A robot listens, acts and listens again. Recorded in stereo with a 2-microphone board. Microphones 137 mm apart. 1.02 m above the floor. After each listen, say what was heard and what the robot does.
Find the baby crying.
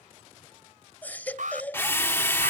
Turn 30° left.
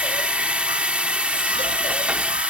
Keep listening.
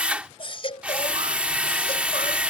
So it is at 140° left. Turn 140° left.
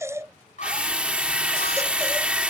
The baby crying is now 20° right. Turn 20° right.
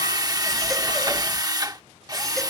Keep listening.
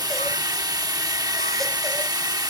Keep listening.
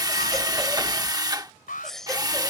Found it: a baby crying, straight ahead.